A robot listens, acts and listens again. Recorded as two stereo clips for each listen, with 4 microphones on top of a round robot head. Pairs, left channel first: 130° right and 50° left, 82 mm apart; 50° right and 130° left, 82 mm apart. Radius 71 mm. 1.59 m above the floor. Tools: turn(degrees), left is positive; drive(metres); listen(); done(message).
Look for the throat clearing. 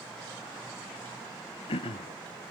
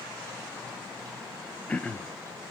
turn(degrees=-125)
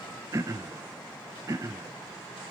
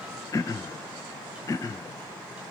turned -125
done("Found it: throat clearing, straight ahead.")